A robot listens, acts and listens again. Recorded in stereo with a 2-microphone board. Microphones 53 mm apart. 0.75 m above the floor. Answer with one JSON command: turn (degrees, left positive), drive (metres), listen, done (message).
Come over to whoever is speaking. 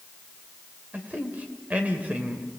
{"turn": -30}
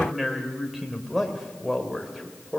{"drive": 1.0}
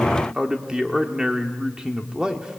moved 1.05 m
{"turn": -15}
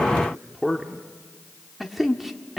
{"drive": 1.0}
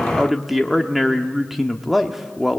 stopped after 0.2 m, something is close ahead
{"done": "I am next to the man speaking."}